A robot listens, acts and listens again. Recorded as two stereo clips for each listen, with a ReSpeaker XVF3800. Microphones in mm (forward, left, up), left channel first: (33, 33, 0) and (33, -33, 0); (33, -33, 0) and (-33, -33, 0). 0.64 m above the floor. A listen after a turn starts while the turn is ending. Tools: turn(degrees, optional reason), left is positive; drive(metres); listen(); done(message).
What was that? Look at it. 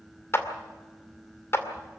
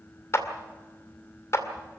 turn(degrees=40, reason="The clap: 40° left.")
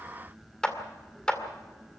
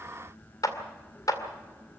turn(degrees=15, reason="The clap is now 15° left.")
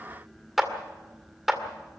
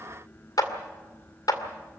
done("Found it: a clap, straight ahead.")